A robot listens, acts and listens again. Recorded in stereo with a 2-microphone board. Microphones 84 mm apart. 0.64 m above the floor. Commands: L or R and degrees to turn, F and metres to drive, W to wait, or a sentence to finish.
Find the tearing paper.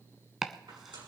R90
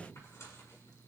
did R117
L35
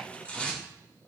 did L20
L15
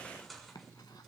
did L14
Facing the tearing paper, over 4 m away.